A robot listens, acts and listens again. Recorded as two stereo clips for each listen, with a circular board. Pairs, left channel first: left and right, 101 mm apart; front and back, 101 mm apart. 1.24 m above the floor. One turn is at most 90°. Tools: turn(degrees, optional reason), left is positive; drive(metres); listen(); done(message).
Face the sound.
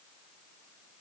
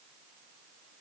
listen()
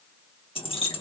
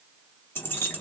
turn(degrees=70, reason="The keys jangling: 70° left.")
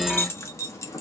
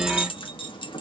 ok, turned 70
turn(degrees=35, reason="The keys jangling is now 35° left.")
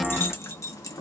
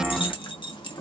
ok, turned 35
turn(degrees=35, reason="The keys jangling is now 35° left.")
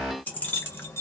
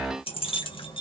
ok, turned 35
turn(degrees=25, reason="The keys jangling is now 25° left.")
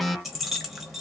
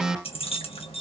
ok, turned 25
done("Found it: keys jangling, straight ahead.")